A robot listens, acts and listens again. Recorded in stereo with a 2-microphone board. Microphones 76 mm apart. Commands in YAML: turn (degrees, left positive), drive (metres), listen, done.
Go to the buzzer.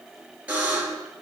turn: -20
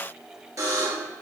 turn: -140
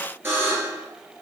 turn: -30
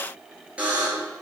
turn: -15
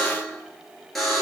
drive: 1.0
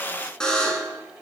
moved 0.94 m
turn: 10
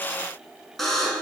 drive: 1.0
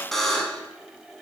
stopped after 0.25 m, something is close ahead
done: "I am next to the buzzer."